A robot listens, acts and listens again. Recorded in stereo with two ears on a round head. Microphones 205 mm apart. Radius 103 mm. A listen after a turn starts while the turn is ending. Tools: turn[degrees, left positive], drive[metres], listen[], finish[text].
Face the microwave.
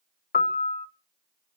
Action: listen[]
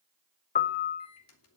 Thought: The microwave: about 70° left or 110° left.
Action: turn[70]
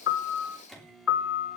Action: finish[Found it: a microwave, straight ahead.]